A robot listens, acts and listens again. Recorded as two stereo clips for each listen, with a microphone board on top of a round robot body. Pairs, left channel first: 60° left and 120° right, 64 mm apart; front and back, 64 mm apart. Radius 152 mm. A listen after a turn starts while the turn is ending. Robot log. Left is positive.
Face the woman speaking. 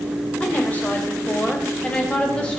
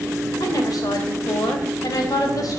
note: The woman speaking: 15° right.
cmd yaw -15
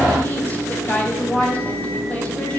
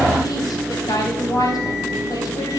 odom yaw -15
end: Found it: a woman speaking, straight ahead, over 4 m away.